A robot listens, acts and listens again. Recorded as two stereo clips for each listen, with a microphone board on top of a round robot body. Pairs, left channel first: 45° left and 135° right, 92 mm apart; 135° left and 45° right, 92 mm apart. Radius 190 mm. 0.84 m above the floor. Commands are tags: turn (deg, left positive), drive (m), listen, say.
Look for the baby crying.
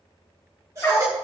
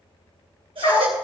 <turn deg="-80"/>
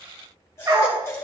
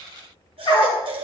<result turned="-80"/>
<turn deg="-20"/>
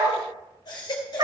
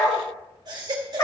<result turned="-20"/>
<say>Facing the baby crying, 1 to 2 m away.</say>